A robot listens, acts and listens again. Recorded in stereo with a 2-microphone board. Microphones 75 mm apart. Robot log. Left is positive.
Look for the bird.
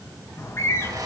note: The bird: about 35° left or 145° left.
cmd yaw +35
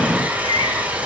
note: So it is at 110° left.
cmd yaw +110
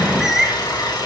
end: Found it: a bird, straight ahead.